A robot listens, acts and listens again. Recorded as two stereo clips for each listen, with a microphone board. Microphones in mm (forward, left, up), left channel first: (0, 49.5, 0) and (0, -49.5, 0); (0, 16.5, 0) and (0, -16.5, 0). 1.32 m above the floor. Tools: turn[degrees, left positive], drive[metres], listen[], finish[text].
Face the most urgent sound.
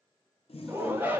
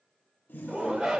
Thought: The shout: about 20° right or 160° right.
Action: turn[-20]
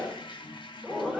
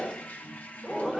Action: finish[Facing the shout, 1 to 2 m away.]